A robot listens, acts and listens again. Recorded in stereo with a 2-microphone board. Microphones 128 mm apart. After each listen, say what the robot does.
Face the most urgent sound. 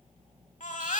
Turn 90° left.
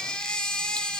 Found it: a baby crying, straight ahead, 1 to 2 m away.